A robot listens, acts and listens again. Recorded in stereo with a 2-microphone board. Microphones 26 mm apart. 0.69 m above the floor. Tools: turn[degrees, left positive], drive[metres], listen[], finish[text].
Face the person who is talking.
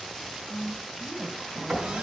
Thought: The woman speaking: about 25° right or 155° right.
Action: turn[-25]
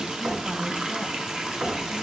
Action: listen[]
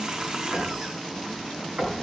Action: listen[]
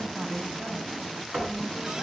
Thought: So it is at 130° right.
Action: turn[-130]
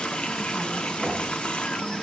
Action: listen[]
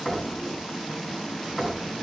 Action: listen[]
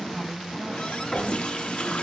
Thought: The woman speaking is now 35° right.
Action: turn[-35]
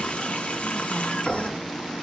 Action: listen[]
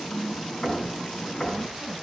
Action: finish[Found it: a woman speaking, straight ahead.]